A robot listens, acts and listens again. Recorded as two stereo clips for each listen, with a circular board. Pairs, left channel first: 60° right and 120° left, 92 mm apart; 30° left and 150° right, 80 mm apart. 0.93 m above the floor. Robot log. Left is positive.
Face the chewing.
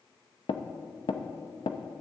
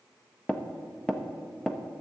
cmd idle
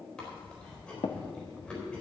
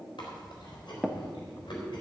note: The chewing: 15° left.
cmd yaw +15
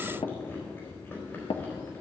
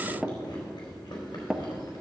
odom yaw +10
end: Facing the chewing, 2 to 4 m away.